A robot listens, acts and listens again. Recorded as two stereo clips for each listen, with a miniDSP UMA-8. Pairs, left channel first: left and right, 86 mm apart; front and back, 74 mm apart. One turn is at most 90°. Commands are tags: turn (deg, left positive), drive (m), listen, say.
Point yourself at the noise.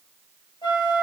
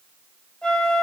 <turn deg="75"/>
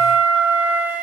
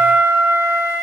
<turn deg="-20"/>
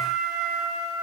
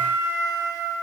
<turn deg="-10"/>
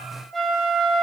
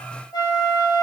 <say>Found it: a flute, straight ahead, 2 to 4 m away.</say>